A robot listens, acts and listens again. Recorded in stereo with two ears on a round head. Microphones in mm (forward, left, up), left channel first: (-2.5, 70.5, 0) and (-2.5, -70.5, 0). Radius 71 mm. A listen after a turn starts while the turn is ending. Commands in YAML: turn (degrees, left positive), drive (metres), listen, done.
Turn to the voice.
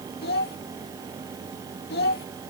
turn: 70
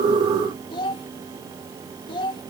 turn: 30
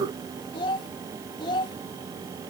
turn: 30
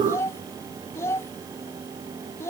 turn: 20
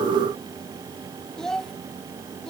done: "Facing the child speaking."